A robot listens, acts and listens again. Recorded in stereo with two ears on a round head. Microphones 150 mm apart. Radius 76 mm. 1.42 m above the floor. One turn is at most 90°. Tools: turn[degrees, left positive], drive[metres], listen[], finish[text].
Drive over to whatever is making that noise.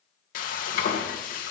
Thought: The frying: about 55° left or 125° left.
Action: turn[55]
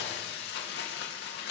Thought: So it is at 65° left.
Action: turn[65]
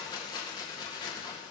Thought: The frying is now 25° left.
Action: turn[25]
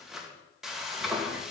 Action: drive[1.0]
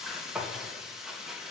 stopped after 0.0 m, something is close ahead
Action: finish[Blocked. The frying is further on, straight ahead.]